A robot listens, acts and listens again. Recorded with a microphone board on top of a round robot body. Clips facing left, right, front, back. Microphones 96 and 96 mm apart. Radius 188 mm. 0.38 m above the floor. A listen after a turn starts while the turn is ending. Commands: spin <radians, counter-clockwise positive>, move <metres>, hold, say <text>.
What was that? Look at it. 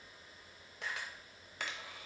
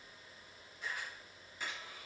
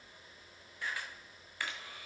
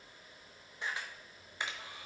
spin 1.92
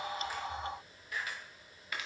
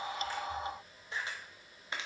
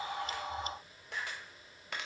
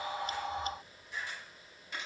spin -0.44
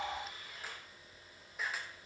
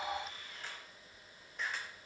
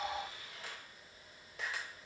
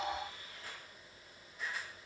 say Facing the camera shutter, under 1 m away.